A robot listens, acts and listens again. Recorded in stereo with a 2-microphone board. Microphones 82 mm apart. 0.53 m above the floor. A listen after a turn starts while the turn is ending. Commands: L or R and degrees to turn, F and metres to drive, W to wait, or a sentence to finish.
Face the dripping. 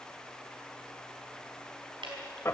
R90
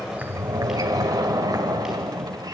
W
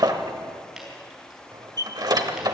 W
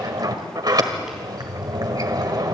I heard dripping from this way, but can't make it out now.